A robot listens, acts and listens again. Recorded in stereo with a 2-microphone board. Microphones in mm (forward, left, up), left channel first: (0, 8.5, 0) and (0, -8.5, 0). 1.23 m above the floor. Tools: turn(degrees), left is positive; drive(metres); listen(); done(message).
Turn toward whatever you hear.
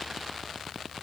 listen()
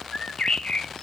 turn(degrees=65)
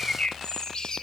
turn(degrees=50)
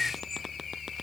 turn(degrees=15)
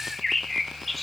done("Found it: a bird, straight ahead.")